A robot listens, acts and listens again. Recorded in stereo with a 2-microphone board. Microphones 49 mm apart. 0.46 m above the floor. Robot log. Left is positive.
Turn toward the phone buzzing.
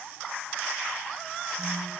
cmd idle
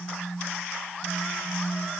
note: The phone buzzing: about 40° right or 140° right.
cmd yaw -40
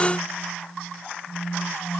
note: So it is at 95° right.
cmd yaw -95
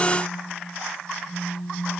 note: The phone buzzing is now 45° right.
cmd yaw -45
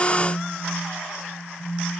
note: The phone buzzing is now 10° left.
cmd yaw +10
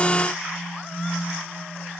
end: Facing the phone buzzing.